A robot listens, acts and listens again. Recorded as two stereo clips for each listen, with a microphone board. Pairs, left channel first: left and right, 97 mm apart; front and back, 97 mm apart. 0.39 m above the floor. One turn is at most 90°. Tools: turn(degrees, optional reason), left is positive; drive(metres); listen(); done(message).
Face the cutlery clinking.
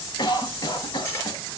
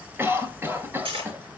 turn(degrees=90, reason="The cutlery clinking: 155° left.")
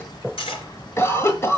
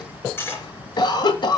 turn(degrees=70, reason="The cutlery clinking is now 70° left.")
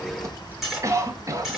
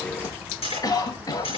done("Found it: cutlery clinking, straight ahead.")